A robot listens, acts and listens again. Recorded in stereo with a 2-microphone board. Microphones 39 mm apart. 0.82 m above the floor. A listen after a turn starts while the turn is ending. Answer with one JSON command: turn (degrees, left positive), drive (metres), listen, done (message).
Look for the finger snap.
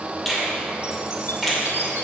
{"turn": 30}
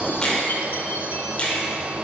{"turn": 155}
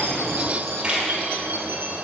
{"turn": -25}
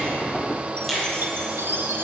{"turn": 10}
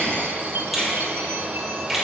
{"done": "Found it: a finger snap, straight ahead."}